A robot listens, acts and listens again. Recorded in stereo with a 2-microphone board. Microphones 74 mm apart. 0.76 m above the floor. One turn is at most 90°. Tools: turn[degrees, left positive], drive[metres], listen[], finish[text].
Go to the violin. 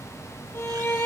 Thought: The violin: about 35° left or 145° left.
Action: turn[35]
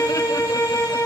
Thought: So it is at 105° left.
Action: turn[90]
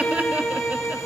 Thought: The violin is now 20° left.
Action: turn[20]
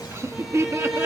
Action: drive[1.0]
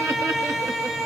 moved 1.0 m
Action: drive[1.0]
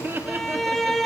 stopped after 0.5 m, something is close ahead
Action: finish[Arrived at the violin, straight ahead.]